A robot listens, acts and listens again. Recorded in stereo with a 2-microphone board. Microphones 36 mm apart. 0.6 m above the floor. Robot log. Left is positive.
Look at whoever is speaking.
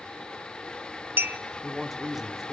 cmd yaw -30
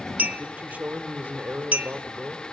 note: So it is at 120° right.
cmd yaw -120
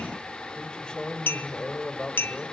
note: The man speaking is now 25° left.
cmd yaw +25
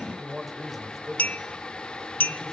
end: Facing the man speaking, 2 to 4 m away.